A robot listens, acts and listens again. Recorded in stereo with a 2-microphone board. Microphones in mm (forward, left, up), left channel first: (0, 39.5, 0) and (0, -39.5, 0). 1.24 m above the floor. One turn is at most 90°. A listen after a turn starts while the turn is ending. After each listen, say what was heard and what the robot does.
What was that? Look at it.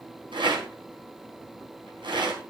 Turn 90° right.
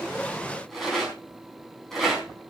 Facing the rattle.